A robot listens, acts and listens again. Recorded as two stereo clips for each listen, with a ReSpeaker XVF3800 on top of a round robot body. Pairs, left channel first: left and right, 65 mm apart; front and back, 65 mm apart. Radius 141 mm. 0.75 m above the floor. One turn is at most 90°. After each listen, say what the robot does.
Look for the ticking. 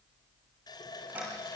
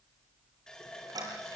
Turn 90° right.
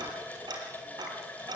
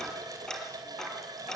Turn 80° right.
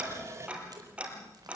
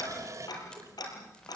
Turn 20° right.
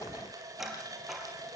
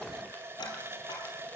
Facing the ticking.